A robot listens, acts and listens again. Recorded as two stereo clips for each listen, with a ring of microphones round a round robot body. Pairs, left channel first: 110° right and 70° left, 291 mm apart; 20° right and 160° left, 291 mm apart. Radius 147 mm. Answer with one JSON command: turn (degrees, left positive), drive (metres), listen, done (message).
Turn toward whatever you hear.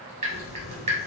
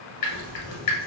{"done": "Facing the dripping."}